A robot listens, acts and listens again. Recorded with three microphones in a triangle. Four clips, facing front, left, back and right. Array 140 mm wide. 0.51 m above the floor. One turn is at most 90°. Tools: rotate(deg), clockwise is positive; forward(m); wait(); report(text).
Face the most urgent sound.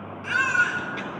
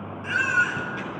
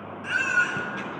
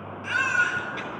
rotate(30)
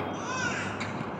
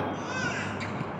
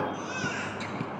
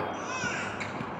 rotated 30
rotate(10)
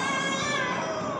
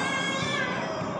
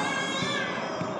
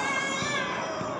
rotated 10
report("Facing the baby crying.")